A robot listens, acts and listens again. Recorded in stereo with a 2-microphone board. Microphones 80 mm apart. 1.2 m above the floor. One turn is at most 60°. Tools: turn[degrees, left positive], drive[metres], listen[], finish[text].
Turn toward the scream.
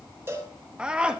Action: turn[-30]
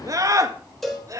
Thought: So it is at 140° right.
Action: turn[-60]
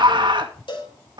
Thought: The scream is now 70° right.
Action: turn[-60]
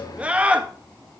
Thought: The scream is now 15° right.
Action: turn[-15]
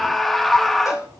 Action: finish[Found it: a scream, straight ahead.]